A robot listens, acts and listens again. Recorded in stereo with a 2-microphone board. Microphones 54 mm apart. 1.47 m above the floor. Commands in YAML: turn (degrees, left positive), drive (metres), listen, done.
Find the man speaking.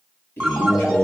turn: 40
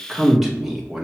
turn: -10
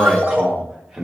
turn: -10
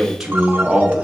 turn: -20
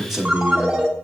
turn: -15
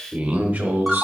turn: -30
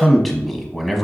done: "Found it: a man speaking, straight ahead."